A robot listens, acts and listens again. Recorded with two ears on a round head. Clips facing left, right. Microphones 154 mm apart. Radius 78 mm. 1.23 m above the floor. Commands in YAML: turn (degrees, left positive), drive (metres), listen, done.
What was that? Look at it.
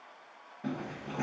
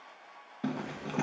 turn: -70
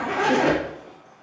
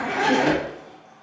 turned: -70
turn: -10
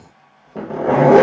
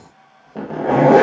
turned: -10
done: "Facing the zipper, 1 to 2 m away."